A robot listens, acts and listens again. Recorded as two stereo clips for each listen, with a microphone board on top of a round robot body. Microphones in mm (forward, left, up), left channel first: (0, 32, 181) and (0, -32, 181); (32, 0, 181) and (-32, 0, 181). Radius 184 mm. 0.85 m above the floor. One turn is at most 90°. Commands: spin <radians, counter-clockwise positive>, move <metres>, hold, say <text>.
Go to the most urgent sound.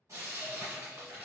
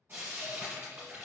hold
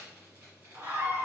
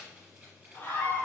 spin -0.87
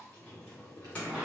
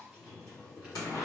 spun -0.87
hold
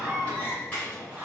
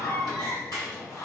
spin -0.44
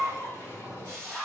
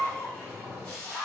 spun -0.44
move 1.0
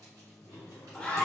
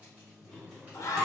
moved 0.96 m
spin 0.26
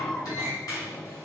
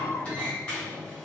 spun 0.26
move 1.0
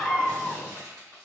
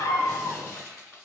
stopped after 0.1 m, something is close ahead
say I am next to the scream.